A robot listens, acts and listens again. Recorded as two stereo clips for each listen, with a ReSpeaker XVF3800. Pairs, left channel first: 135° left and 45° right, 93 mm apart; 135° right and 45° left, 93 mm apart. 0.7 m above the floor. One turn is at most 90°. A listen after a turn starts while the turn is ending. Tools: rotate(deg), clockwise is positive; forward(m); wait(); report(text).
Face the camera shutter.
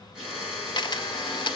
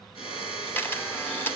rotate(-90)
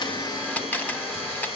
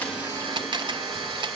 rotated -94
rotate(-65)
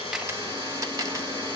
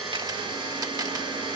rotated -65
wait()
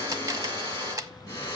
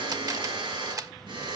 report("Found it: a camera shutter, straight ahead, under 1 m away.")